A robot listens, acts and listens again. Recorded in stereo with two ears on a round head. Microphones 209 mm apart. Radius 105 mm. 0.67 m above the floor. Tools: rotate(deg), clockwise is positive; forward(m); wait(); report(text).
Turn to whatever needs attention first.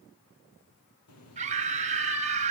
rotate(30)
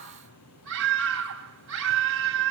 rotate(120)
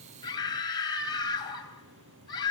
rotate(-20)
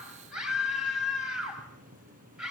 report("Facing the scream, 2 to 4 m away.")